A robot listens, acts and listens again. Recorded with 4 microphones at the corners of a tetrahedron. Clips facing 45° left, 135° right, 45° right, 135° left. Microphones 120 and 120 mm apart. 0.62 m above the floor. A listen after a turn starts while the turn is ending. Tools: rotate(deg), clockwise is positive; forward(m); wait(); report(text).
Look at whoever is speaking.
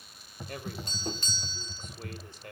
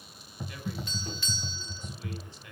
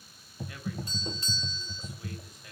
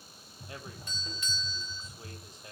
rotate(-80)
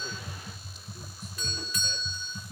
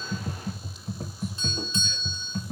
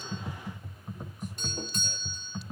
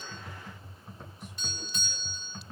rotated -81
wait()
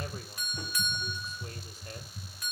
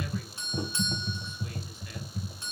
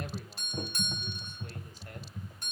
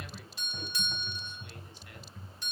wait()
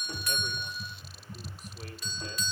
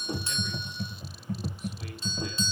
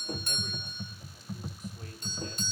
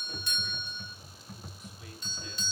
report("Facing where the man speaking came from. I can't hear it now.")